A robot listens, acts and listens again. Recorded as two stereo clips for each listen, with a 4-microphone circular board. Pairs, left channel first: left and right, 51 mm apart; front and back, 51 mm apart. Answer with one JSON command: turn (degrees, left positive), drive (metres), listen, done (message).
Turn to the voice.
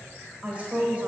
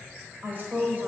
{"turn": -150}
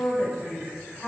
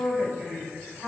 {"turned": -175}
{"turn": 25}
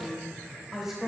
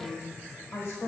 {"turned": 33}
{"done": "Found it: a woman speaking, straight ahead."}